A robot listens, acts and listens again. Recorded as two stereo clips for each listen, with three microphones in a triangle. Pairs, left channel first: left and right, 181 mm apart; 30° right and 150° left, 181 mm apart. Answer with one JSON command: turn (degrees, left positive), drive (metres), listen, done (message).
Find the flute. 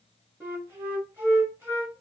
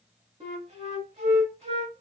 {"turn": -160}
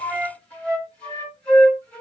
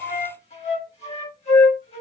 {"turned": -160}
{"turn": 10}
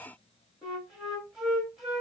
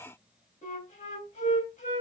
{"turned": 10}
{"done": "Facing the flute."}